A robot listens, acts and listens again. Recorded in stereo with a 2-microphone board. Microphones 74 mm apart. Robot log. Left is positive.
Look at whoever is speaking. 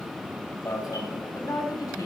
note: The woman speaking: about 55° left or 125° left.
cmd yaw +55
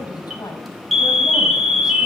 note: So it is at 70° left.
cmd yaw +70
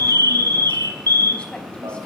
cmd idle
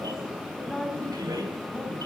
note: The woman speaking is now 15° left.
cmd yaw +15
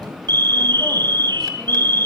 cmd idle
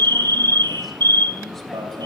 cmd idle
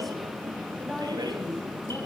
end: Facing the woman speaking, 2 to 4 m away.